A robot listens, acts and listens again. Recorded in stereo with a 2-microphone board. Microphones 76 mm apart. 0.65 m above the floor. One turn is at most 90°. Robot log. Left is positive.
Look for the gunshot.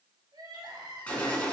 note: The gunshot: about 20° left or 160° left.
cmd yaw +20
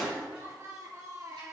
end: Found it: a gunshot, straight ahead, 2 to 4 m away.